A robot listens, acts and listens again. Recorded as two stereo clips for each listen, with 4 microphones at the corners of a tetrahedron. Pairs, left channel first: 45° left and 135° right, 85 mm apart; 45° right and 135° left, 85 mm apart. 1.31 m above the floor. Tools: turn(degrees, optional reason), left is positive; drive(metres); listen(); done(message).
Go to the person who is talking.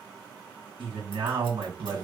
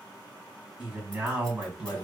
turn(degrees=-150, reason="The man speaking: 150° right.")
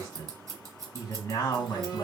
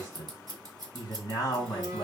turn(degrees=-10, reason="The man speaking is now 10° right.")
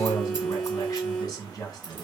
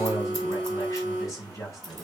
drive(metres=1.0)
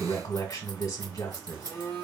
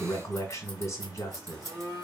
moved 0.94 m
drive(metres=1.0)
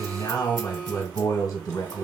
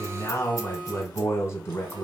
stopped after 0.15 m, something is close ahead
done("I am next to the man speaking.")